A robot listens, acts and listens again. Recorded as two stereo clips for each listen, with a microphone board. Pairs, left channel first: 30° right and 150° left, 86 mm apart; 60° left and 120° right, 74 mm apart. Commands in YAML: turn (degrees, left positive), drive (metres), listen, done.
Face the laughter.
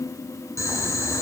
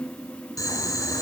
listen: true
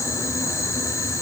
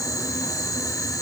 listen: true
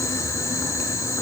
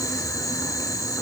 done: "I can't make out laughter, only boiling."